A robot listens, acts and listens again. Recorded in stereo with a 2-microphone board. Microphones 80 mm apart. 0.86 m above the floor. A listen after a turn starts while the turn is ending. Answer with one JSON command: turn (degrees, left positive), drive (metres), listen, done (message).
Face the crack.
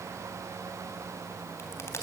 {"turn": 40}
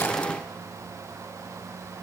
{"listen": true}
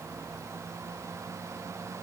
{"done": "I heard a crack, but can't make it out now. It was about straight ahead or 100° left."}